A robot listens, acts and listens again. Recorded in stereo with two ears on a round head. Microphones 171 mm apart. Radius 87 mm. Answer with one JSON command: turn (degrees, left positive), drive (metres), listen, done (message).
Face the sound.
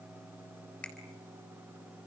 {"turn": 30}
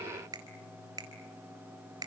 {"turn": -20}
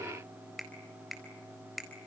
{"done": "Found it: a finger snap, straight ahead."}